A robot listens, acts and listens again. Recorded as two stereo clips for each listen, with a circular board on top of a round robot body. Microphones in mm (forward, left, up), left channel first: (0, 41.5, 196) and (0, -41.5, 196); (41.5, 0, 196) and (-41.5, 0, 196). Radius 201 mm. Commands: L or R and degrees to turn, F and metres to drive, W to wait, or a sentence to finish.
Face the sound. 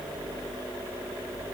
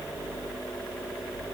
W
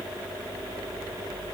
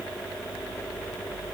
W
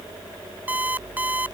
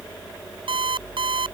R160
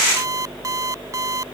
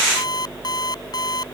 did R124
R40
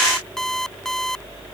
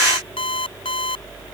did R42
Facing the alarm clock.